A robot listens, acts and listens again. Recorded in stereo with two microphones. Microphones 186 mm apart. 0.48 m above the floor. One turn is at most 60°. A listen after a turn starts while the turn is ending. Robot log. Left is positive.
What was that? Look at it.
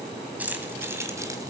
cmd yaw -30
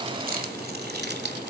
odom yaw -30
note: So it is at 115° right.
cmd yaw -60
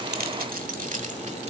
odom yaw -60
note: The keys jangling is now 45° right.
cmd yaw -45
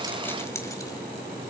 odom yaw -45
cmd idle
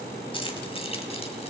note: The keys jangling is now 35° left.
cmd yaw +35
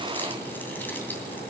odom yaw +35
cmd idle
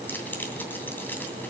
note: The keys jangling is now 10° left.
cmd yaw +10
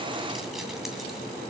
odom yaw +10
cmd idle
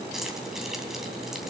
end: Facing the keys jangling, 2 to 4 m away.